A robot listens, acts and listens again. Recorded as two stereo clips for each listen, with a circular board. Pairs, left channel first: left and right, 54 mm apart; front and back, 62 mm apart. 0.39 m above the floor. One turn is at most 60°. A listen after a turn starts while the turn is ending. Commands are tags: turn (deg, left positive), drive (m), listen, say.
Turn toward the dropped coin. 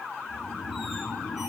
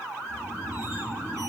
<listen/>
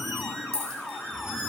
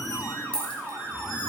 <turn deg="-60"/>
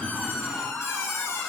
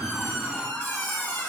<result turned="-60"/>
<turn deg="-10"/>
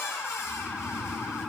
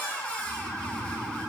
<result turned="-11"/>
<say>I heard a dropped coin from this way, but can't make it out now.</say>